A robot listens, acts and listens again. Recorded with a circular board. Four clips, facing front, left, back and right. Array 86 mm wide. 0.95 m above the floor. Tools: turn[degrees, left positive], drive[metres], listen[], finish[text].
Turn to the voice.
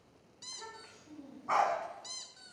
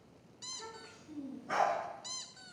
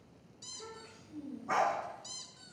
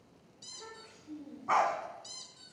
Action: finish[Facing the child speaking.]